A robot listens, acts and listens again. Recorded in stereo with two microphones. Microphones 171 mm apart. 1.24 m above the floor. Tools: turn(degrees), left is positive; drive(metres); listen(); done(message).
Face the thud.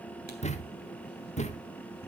turn(degrees=40)
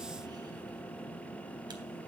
listen()
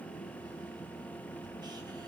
done("I heard a thud, but can't make it out now. It was about straight ahead or 100° left.")